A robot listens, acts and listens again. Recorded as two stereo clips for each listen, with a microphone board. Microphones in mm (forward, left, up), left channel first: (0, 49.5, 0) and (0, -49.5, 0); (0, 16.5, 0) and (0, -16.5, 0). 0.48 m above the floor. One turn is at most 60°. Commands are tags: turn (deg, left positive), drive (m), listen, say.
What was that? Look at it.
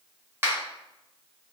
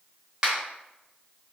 <turn deg="-25"/>
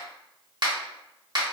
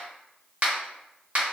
<turn deg="-60"/>
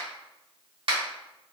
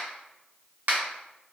<turn deg="-60"/>
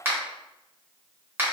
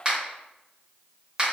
<turn deg="-25"/>
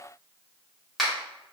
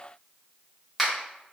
<say>Found it: a finger snap, straight ahead, 1 to 2 m away.</say>